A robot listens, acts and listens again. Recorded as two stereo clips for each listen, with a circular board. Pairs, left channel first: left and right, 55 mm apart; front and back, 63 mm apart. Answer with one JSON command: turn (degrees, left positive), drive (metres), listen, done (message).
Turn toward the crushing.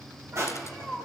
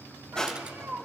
{"turn": -75}
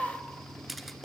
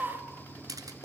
{"done": "Facing the crushing, 2 to 4 m away."}